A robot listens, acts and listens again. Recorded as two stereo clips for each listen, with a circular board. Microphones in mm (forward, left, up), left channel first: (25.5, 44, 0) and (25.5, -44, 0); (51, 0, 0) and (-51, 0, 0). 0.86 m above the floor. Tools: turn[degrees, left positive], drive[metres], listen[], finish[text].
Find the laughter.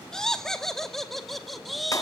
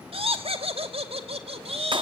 Thought: The laughter: straight behind.
Action: turn[180]
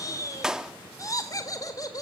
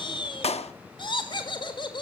Thought: The laughter is now 40° left.
Action: turn[40]
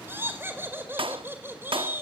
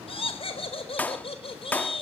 Thought: The laughter is now 25° right.
Action: turn[-25]
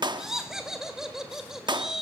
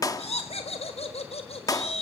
Action: finish[Found it: laughter, straight ahead.]